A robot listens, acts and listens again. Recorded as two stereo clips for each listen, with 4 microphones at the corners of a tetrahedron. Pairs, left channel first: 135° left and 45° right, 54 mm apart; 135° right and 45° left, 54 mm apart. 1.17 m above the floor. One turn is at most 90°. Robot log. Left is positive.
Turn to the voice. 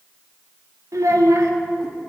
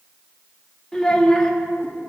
note: The child speaking: 55° right.
cmd yaw -55
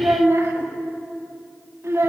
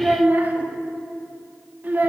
note: The child speaking is now 10° right.
cmd yaw -10
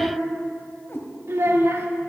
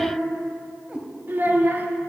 end: Found it: a child speaking, straight ahead, 1 to 2 m away.